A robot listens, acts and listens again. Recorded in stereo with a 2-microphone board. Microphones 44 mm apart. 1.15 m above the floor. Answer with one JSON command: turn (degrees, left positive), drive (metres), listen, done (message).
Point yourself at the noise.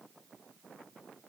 {"listen": true}
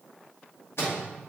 {"turn": 65}
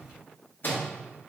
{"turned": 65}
{"turn": 50}
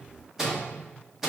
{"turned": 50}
{"turn": -10}
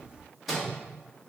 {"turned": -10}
{"done": "Found it: a microwave, straight ahead."}